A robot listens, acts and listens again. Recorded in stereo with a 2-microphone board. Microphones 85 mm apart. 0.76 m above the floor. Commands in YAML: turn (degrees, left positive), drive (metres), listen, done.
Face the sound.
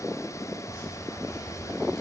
turn: 40
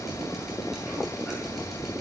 done: "Found it: dripping, straight ahead."